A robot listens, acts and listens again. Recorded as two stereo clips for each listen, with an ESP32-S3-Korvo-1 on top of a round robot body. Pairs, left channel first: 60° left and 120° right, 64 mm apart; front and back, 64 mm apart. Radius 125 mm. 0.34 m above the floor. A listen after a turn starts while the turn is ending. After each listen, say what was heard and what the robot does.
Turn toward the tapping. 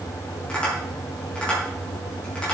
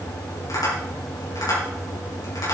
The tapping: 15° right. Turn 15° right.
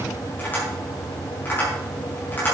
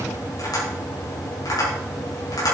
Facing the tapping, over 4 m away.